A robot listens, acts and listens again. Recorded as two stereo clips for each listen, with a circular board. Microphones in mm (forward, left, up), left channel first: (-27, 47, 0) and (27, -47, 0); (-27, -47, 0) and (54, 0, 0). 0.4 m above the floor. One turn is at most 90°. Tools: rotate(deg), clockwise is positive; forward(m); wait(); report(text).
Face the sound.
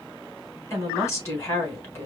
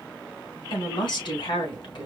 rotate(90)
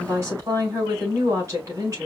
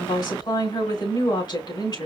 rotate(90)
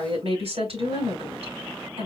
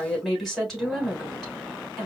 rotate(65)
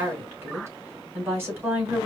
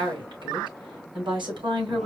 report("Found it: a woman speaking, straight ahead.")